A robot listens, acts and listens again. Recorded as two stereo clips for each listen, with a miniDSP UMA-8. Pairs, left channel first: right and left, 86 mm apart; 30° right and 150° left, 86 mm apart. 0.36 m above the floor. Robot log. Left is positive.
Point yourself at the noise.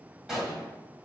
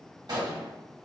note: The gunshot: 175° left.
cmd yaw +175
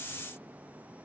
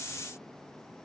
end: I heard a gunshot from this way, but can't make it out now.